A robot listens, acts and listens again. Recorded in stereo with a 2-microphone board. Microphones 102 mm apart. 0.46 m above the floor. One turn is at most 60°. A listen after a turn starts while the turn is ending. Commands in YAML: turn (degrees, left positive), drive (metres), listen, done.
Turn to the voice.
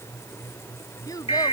turn: 40
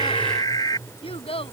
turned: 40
turn: 60
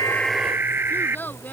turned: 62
turn: 20
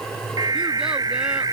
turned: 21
listen: true
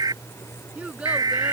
turn: -10
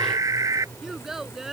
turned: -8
done: "Facing the child speaking."